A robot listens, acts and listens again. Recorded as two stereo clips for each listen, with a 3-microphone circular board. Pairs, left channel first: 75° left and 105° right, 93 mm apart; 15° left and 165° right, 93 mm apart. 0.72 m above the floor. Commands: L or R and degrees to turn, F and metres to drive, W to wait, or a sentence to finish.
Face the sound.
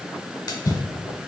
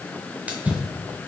L120
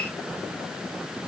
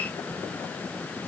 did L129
R10
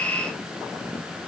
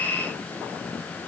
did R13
I heard a splash from this way, but can't make it out now.